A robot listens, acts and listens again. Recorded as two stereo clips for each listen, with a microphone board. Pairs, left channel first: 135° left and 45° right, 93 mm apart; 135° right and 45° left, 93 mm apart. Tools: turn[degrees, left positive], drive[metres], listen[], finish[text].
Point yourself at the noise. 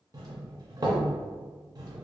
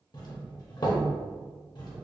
Thought: The doorbell: 95° right.
Action: turn[-95]
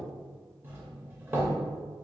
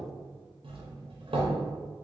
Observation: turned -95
Thought: The doorbell is now 20° left.
Action: turn[20]
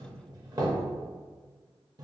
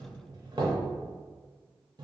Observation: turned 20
Action: finish[Found it: a doorbell, straight ahead, under 1 m away.]